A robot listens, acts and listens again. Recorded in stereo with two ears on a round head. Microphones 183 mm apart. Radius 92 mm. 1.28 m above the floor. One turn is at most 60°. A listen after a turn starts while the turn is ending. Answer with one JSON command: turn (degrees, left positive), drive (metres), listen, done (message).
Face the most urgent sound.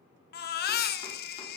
{"turn": 50}
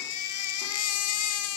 {"turn": 60}
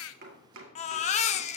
{"turn": 35}
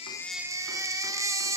{"turn": -15}
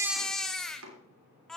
{"done": "Facing the baby crying."}